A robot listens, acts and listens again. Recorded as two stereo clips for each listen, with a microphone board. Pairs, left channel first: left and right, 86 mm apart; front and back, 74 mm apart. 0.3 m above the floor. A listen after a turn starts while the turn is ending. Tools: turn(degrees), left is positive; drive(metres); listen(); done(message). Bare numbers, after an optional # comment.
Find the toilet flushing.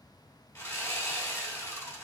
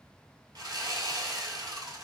listen()
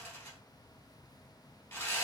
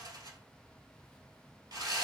listen()
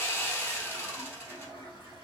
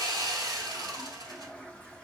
# The toilet flushing: 75° right.
turn(-75)
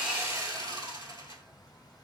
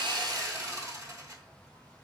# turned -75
listen()
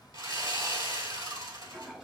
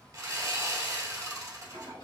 done("Found it: a toilet flushing, straight ahead, 1 to 2 m away.")